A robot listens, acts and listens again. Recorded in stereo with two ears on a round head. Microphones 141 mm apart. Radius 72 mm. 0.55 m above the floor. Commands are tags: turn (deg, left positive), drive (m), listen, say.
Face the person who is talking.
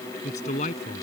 <turn deg="45"/>
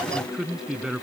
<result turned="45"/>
<say>Found it: a man speaking, straight ahead.</say>